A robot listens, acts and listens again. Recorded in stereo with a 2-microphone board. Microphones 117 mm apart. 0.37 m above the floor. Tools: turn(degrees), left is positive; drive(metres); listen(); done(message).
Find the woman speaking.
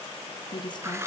turn(degrees=40)
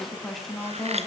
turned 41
done("Facing the woman speaking.")